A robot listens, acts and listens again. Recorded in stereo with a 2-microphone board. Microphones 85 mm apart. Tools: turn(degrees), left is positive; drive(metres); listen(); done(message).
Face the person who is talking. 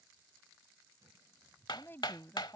turn(degrees=25)
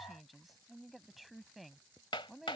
done("Found it: a woman speaking, straight ahead.")